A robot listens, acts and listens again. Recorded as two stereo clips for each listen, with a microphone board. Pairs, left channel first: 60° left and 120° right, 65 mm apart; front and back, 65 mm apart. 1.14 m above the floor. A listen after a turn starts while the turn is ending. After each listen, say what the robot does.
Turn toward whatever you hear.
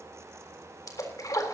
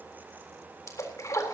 Turn 35° left.
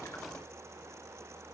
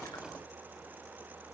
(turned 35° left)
I heard a splash from this way, but can't make it out now.